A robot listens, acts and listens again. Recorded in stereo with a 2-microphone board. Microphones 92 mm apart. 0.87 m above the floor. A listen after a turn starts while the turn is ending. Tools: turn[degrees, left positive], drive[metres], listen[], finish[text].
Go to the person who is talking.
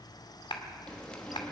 Action: listen[]
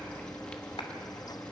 Action: listen[]
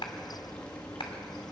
Action: finish[I can't make out anyone speaking to turn to.]